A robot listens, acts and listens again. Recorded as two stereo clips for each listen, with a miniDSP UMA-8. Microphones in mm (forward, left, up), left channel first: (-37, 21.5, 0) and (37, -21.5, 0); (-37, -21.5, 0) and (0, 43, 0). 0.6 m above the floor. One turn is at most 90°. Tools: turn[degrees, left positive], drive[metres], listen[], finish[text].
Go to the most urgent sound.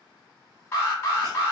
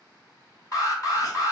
Thought: The alarm: 155° right.
Action: turn[-90]
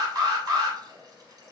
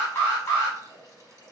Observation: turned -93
Thought: The alarm is now 60° right.
Action: turn[-60]
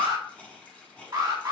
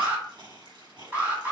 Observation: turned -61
Action: drive[1.0]
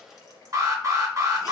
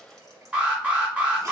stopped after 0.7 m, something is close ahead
Action: finish[Arrived at the alarm, straight ahead.]